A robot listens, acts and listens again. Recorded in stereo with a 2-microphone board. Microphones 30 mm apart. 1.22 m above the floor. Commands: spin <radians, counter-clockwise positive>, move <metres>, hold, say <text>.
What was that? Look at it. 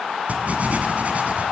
spin -0.96
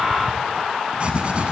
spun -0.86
spin -0.96
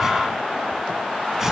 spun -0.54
spin -0.35
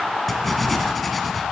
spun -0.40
say Found it: writing, straight ahead.